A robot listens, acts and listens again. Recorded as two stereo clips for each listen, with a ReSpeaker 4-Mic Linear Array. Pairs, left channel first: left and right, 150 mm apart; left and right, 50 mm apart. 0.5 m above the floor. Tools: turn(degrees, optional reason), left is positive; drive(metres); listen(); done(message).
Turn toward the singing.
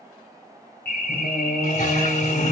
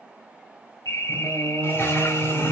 turn(degrees=40, reason="The singing: about 40° left or 140° left.")
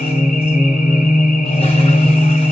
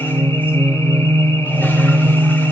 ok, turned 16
turn(degrees=35, reason="The singing: about 35° left or 145° left.")
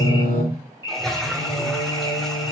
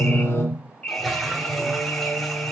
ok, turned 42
turn(degrees=110, reason="So it is at 110° left.")
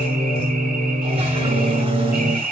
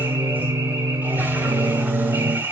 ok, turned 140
turn(degrees=-30, reason="The singing is now 30° right.")
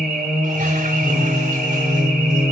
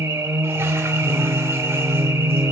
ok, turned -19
turn(degrees=-10, reason="The singing is now 10° right.")
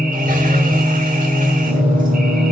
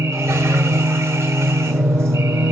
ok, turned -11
done("Facing the singing.")